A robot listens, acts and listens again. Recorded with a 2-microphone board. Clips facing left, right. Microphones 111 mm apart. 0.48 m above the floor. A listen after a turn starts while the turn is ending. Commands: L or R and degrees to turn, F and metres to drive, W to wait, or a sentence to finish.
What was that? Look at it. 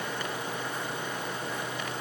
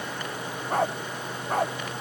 R65
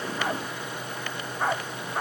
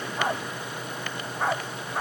Found it: a dog barking, straight ahead.